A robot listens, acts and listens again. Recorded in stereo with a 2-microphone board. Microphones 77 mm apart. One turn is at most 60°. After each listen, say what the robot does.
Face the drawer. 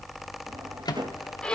Turn 60° right.
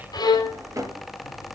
Turn 45° right.
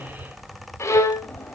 Keep listening.
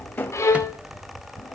Turn 25° left.
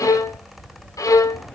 Keep listening.
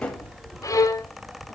Turn 15° left.
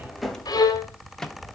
Found it: a drawer, straight ahead.